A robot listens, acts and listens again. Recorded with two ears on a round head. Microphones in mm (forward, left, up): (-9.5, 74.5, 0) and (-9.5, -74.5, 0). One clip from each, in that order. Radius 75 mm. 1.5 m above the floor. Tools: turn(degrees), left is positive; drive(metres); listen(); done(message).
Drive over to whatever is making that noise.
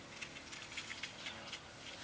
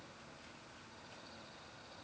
listen()
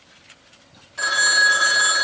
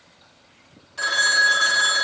turn(degrees=-30)
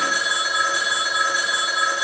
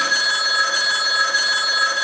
turn(degrees=-140)
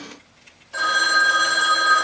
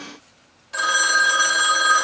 turn(degrees=-30)
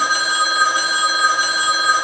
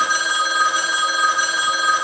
turn(degrees=-15)
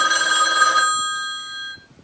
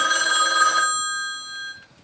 drive(metres=1.0)
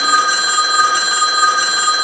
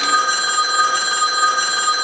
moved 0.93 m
drive(metres=1.0)
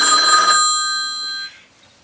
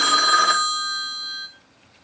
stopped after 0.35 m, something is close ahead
done("I am next to the phone ringing.")